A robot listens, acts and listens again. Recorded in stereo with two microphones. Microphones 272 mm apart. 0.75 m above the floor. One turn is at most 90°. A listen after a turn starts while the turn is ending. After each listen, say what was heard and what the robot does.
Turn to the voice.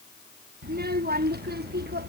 The child speaking: about 35° right or 145° right. Turn 35° right.
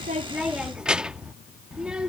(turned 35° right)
Facing the child speaking.